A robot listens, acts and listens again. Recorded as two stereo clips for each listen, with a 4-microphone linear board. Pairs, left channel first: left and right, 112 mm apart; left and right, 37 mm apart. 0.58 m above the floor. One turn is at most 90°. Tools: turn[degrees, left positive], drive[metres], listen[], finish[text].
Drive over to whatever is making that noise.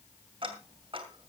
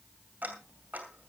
Thought: The ticking: about 50° right or 130° right.
Action: turn[-50]
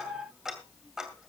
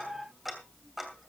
Action: drive[1.0]
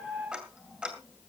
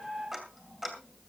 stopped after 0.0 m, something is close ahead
Thought: The ticking is now 10° right.
Action: turn[-10]
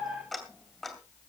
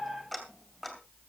Action: finish[Something is in my way. I am facing the ticking but have not reached it.]